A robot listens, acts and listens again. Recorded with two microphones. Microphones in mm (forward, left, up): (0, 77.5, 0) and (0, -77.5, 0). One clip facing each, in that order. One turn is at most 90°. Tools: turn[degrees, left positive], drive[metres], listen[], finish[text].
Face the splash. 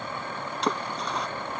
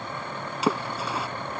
Action: turn[-30]
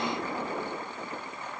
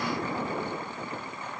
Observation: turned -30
Action: listen[]
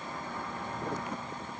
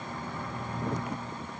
Action: finish[I heard a splash, but can't make it out now. It was about 25° left or 145° right.]